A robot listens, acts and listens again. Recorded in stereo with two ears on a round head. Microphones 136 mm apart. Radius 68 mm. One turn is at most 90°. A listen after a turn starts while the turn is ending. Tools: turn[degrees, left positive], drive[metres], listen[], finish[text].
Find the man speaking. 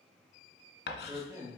Thought: The man speaking: about 25° right or 155° right.
Action: turn[-25]
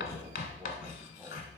Action: listen[]
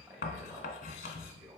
Thought: The man speaking: about 15° right or 165° right.
Action: turn[-15]
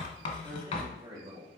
Thought: The man speaking: about 30° right or 150° right.
Action: turn[-30]
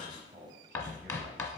Action: listen[]
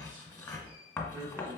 Thought: The man speaking: about 20° right or 160° right.
Action: turn[-20]
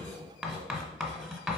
Action: listen[]
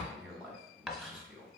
Action: finish[Facing the man speaking.]